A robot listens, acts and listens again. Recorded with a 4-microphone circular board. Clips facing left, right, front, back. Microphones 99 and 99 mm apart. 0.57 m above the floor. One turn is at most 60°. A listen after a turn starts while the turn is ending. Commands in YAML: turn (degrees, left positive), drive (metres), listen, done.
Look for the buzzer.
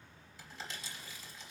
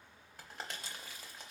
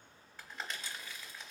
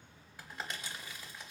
listen: true
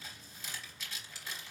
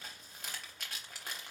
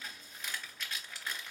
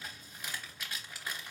listen: true
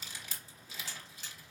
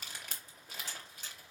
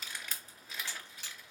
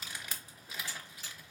done: "Facing the buzzer, 2 to 4 m away."